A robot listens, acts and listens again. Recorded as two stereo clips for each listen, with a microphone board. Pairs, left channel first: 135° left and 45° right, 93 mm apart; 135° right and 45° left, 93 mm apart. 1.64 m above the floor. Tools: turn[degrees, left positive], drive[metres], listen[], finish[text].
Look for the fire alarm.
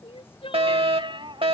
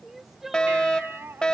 Thought: The fire alarm: 55° right.
Action: turn[-55]
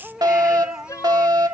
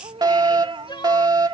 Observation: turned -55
Action: finish[Found it: a fire alarm, straight ahead.]